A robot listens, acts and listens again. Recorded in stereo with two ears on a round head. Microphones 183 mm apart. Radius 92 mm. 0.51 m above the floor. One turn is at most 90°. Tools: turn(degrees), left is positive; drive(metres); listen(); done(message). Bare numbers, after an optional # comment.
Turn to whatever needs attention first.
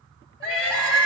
# The crying: about 30° left or 150° left.
turn(30)
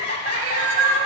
# So it is at 120° left.
turn(90)
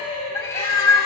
# The crying is now 25° left.
turn(25)
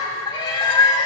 # The crying is now 15° left.
turn(15)
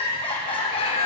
# The crying is now 10° left.
turn(10)
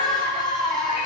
done("Facing the crying.")